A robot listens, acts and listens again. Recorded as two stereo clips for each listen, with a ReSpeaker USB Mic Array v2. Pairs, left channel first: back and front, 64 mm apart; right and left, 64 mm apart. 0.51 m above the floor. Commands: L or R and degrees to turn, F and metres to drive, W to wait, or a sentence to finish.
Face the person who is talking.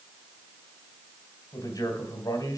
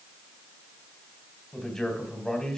R170
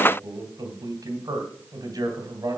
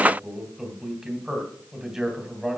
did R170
Facing the man speaking.